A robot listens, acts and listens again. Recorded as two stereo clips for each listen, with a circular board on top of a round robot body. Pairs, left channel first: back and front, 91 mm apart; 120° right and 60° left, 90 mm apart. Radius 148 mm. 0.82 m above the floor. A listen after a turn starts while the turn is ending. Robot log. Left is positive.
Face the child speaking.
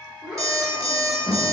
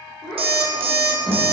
note: The child speaking: 75° right.
cmd yaw -75
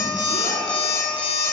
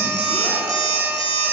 cmd idle
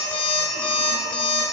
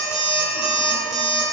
cmd idle
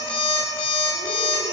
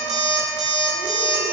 end: Facing where the child speaking came from. I can't hear it now.